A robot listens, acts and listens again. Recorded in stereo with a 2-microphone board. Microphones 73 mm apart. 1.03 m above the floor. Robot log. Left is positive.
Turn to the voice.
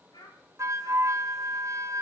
note: The child speaking: about 70° left or 110° left.
cmd yaw +70
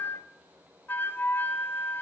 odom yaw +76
cmd idle
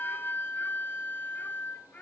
note: So it is at 20° left.
cmd yaw +20
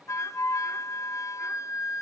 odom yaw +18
cmd idle
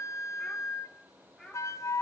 end: Facing the child speaking, 2 to 4 m away.